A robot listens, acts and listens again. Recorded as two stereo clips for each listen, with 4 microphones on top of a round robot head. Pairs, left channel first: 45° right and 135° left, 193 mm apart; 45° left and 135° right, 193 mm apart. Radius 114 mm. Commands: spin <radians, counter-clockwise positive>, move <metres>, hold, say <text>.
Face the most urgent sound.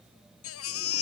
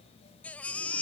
spin -0.70
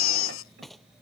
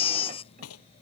spin -0.35
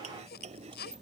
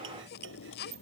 say Found it: a baby crying, straight ahead.